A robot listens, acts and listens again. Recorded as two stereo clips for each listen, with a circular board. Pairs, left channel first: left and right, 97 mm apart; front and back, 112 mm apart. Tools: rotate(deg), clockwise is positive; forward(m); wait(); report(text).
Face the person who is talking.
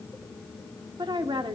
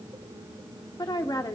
rotate(55)
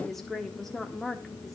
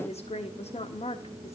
report("Found it: a woman speaking, straight ahead.")